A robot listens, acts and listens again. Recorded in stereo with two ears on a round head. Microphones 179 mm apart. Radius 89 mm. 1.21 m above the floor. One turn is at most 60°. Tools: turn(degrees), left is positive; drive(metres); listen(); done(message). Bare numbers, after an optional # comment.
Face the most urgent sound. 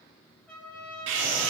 # The scream: about 65° right or 115° right.
turn(-60)
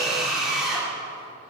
done("Facing the scream.")